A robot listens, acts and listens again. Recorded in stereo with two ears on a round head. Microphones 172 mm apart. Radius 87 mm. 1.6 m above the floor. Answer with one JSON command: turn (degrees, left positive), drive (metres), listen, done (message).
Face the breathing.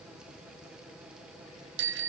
{"listen": true}
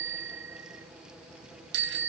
{"listen": true}
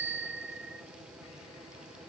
{"done": "I can't make out breathing to turn to."}